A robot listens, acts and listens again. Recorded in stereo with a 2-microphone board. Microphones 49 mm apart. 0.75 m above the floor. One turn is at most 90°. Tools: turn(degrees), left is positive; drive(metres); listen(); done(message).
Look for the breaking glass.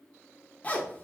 listen()
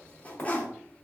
turn(degrees=50)
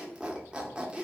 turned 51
listen()
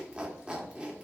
done("I heard breaking glass, but can't make it out now. It was about 5° right or 80° left.")